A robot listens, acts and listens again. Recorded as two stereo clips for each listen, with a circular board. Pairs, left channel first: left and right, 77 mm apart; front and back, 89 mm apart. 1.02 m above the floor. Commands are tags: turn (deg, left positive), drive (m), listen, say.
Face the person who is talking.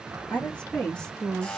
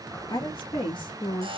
<turn deg="10"/>
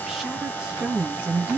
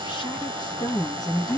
<turn deg="-30"/>
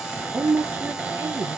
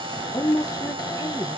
<turn deg="-50"/>
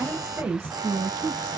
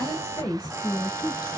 <turn deg="-30"/>
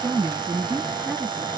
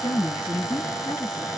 <say>Found it: a woman speaking, straight ahead, 1 to 2 m away.</say>